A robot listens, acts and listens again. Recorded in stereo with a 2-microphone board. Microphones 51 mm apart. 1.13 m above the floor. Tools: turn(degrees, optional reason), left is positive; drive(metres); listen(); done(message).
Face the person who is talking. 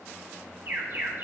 listen()
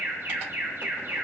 listen()
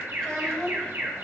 turn(degrees=25, reason="The child speaking: about 25° left or 155° left.")
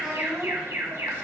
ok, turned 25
done("Found it: a child speaking, straight ahead, over 4 m away.")